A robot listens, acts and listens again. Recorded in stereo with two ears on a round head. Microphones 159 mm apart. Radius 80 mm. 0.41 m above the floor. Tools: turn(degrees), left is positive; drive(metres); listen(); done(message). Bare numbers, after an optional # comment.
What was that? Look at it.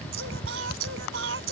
turn(-90)
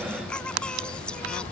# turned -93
done("Found it: singing, straight ahead.")